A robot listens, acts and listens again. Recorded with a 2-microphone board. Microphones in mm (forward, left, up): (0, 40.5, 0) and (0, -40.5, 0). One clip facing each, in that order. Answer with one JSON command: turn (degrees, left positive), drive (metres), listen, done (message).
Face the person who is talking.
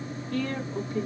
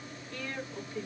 {"turn": 55}
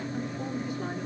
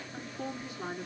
{"done": "Found it: a woman speaking, straight ahead."}